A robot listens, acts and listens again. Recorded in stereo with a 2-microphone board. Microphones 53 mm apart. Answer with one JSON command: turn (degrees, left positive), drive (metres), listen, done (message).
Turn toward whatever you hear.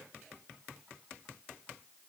{"listen": true}
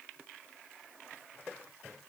{"listen": true}
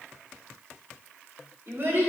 {"turn": -50}
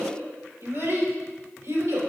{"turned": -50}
{"turn": -75}
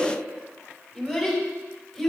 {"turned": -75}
{"done": "Found it: a child speaking, straight ahead, 2 to 4 m away."}